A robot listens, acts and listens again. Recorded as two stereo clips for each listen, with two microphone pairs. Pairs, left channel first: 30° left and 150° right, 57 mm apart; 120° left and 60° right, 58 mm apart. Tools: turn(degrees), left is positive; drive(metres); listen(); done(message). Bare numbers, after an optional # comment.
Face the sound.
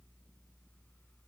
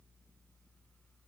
listen()
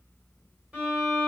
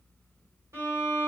# The violin: 85° right.
turn(-85)
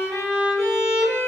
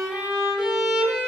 # The violin is now 20° left.
turn(20)
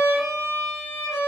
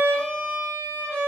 done("Found it: a violin, straight ahead.")